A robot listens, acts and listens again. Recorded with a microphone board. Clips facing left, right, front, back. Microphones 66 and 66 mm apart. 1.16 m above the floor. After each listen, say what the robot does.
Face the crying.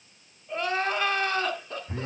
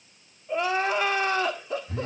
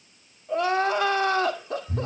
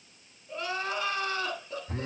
Turn 10° right.
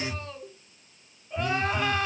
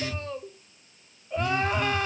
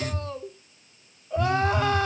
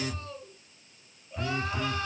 Facing the crying.